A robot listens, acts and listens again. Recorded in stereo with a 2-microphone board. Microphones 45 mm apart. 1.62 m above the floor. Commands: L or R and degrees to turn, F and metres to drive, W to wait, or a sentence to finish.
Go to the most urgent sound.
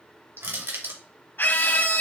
L50
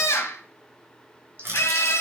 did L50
L75
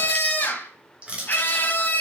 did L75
L40
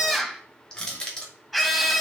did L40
F1.0
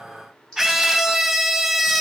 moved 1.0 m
R10
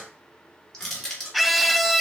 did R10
F1.0
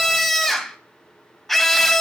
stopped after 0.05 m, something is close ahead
Arrived at the scream, straight ahead.